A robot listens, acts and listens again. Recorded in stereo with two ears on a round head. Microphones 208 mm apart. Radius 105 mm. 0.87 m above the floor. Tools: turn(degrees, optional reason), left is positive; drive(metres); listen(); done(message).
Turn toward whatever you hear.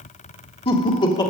turn(degrees=20, reason="The laughter: about 20° left or 160° left.")
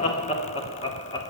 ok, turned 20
turn(degrees=20, reason="The laughter: about 20° left or 160° left.")
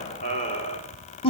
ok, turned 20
turn(degrees=25, reason="The laughter: about 25° left or 155° left.")
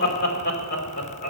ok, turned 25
turn(degrees=145, reason="So it is at 145° left.")
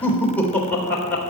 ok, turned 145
done("Facing the laughter.")